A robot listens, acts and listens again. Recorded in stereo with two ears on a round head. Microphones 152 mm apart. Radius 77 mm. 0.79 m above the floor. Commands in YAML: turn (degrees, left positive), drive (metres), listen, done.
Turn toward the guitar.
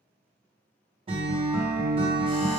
turn: -35
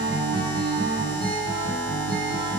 turn: -110
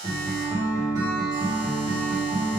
turn: -20
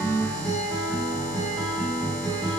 done: "Found it: a guitar, straight ahead, 1 to 2 m away."